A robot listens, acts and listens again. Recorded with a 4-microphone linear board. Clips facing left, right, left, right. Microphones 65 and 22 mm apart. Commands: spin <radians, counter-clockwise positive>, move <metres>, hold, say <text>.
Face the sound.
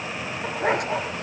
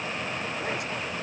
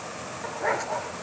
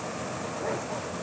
spin 1.05
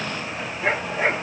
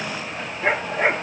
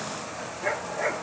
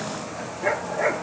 spin -0.26
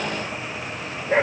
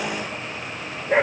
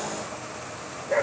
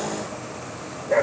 say Facing the dog barking.